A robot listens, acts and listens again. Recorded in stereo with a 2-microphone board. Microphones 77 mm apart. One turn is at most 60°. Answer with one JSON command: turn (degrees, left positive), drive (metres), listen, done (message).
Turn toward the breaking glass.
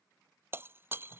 {"turn": -30}
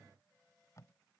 {"listen": true}
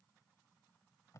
{"done": "I heard breaking glass, but can't make it out now. It was about straight ahead or 120° right."}